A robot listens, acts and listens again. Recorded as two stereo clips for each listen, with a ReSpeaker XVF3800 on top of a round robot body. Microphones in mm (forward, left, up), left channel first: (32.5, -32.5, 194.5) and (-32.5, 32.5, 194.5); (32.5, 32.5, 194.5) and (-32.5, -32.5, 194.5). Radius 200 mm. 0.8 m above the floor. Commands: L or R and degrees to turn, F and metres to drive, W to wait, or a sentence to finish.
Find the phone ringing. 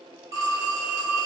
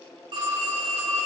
R170
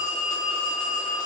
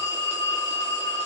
Facing the phone ringing, 1 to 2 m away.